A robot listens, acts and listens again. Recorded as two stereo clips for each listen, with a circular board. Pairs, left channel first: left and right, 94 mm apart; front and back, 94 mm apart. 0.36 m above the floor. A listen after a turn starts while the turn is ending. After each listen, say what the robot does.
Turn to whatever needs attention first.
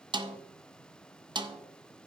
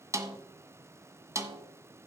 Keep listening.
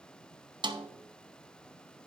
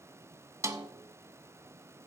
Keep listening.
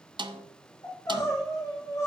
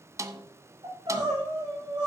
Turn 145° left.
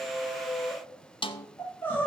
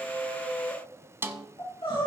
Turn 20° left.
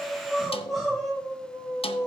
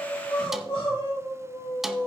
Facing the crying, over 4 m away.